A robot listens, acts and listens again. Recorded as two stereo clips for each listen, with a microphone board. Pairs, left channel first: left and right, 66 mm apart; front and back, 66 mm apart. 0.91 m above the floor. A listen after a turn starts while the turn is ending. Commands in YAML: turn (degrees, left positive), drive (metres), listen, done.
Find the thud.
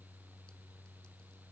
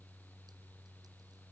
listen: true
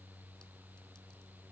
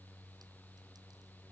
listen: true
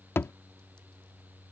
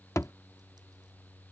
turn: 40
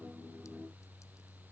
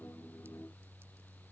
done: "Facing where the thud came from. I can't hear it now."